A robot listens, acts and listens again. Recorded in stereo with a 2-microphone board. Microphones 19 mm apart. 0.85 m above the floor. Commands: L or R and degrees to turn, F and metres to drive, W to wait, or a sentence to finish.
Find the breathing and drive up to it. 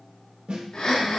L45
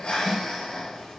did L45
L85
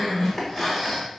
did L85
L15
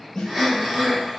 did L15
F1.0
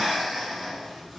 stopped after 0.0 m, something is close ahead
Blocked. The breathing is further on, straight ahead.